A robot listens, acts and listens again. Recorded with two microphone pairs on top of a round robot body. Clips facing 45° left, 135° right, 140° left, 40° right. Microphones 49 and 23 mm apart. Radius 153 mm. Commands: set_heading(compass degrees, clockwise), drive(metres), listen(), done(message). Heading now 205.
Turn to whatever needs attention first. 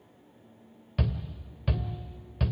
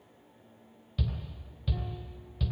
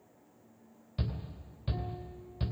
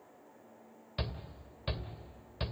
set_heading(195)
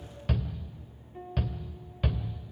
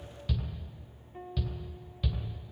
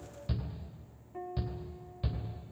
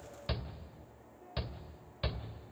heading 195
done("Facing the shout.")